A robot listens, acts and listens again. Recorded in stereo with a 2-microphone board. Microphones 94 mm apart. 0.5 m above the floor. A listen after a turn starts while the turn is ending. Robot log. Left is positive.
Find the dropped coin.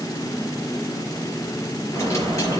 note: The dropped coin: about 35° left or 145° left.
cmd yaw +35
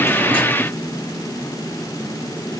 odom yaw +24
cmd idle
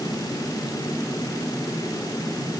end: I heard a dropped coin, but can't make it out now. It was about 10° left or 125° left.